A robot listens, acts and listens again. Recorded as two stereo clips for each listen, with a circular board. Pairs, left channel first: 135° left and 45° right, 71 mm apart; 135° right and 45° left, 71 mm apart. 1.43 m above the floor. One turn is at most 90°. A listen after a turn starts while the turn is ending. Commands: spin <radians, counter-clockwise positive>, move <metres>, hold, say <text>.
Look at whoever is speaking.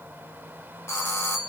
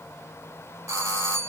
hold
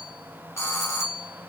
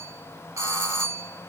hold
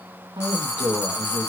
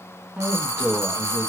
spin -0.52
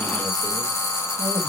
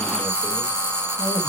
hold
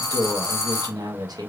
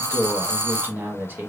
spin -0.35
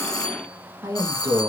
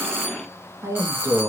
say Facing the woman speaking.